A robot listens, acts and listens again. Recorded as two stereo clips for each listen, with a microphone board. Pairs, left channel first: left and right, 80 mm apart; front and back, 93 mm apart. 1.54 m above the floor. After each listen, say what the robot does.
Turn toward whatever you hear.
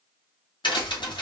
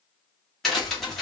Turn 85° left.
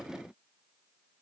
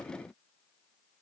I heard a crack from this way, but can't make it out now.